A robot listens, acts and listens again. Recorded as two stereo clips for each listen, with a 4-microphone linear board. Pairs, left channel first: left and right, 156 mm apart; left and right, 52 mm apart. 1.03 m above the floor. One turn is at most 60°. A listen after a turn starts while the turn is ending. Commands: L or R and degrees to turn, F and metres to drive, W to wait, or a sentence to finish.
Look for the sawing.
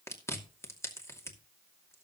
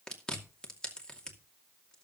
W
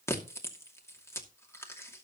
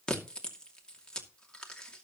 W
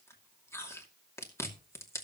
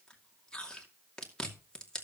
I can't make out sawing, only chewing.